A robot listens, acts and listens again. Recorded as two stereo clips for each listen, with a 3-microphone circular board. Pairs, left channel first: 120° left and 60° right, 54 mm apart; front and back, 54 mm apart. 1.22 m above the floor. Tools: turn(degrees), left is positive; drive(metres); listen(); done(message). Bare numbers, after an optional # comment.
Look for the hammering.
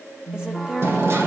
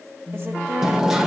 # The hammering: 100° right.
turn(-100)
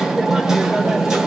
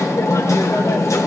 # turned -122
# The hammering is now 20° left.
turn(20)
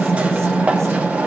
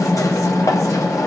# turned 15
done("Facing the hammering.")